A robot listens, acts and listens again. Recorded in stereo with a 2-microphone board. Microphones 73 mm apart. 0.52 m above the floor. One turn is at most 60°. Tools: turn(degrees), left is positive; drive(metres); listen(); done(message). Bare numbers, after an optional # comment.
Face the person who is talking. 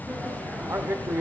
# The man speaking: about 40° right or 140° right.
turn(-40)
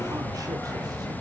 listen()
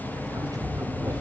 listen()
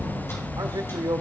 # So it is at 90° right.
turn(-60)
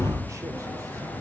# Nothing new. It was at 30° right.
turn(-30)
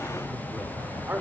# The man speaking is now 30° right.
turn(-30)
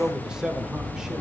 # The man speaking is now 10° right.
turn(-10)
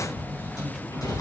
listen()
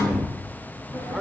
listen()
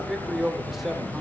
done("Facing the man speaking, 1 to 2 m away.")